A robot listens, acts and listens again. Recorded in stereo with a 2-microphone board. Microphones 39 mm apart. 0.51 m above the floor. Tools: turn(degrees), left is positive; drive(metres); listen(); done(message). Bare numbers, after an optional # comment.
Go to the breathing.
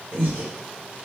# The breathing: about 60° right or 120° right.
turn(-60)
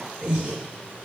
# So it is at 35° right.
turn(-35)
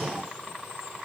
# The breathing is now 10° left.
turn(10)
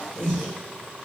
drive(1.0)
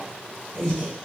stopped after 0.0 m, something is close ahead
# The breathing is now 10° left.
turn(10)
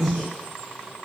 done("Blocked. The breathing is further on, straight ahead.")